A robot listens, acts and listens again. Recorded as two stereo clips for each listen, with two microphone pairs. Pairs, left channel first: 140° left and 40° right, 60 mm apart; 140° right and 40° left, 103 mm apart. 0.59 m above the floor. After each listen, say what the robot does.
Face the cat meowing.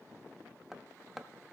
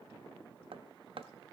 Keep listening.
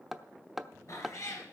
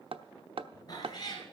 Turn 175° left.
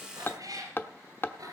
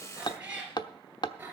Turn 30° right.
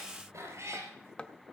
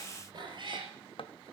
Found it: a cat meowing, straight ahead, over 4 m away.